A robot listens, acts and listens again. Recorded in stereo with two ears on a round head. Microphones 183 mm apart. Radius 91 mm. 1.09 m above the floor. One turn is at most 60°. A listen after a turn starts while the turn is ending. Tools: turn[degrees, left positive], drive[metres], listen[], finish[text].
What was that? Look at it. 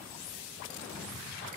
Action: listen[]
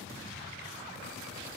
Action: listen[]
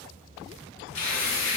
Thought: The tearing paper: about 65° left or 115° left.
Action: turn[60]
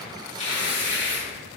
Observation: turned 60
Thought: So it is at 30° left.
Action: turn[30]
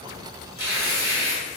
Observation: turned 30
Thought: The tearing paper is now 15° right.
Action: turn[-15]
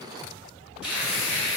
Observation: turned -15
Action: finish[Facing the tearing paper.]